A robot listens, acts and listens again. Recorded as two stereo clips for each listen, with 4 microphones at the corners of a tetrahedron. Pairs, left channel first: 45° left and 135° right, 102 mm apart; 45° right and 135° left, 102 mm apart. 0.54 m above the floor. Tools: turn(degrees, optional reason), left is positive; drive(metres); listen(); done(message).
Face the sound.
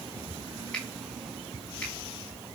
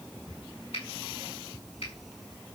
turn(degrees=-35, reason="The finger snap: 35° right.")
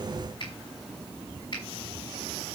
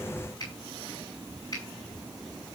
done("Facing the finger snap, over 4 m away.")